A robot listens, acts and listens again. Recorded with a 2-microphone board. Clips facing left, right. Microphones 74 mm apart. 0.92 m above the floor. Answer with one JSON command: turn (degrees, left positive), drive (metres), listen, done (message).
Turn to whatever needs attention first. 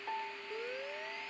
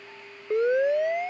{"turn": -90}
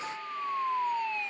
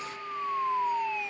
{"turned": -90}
{"done": "Found it: a siren, straight ahead."}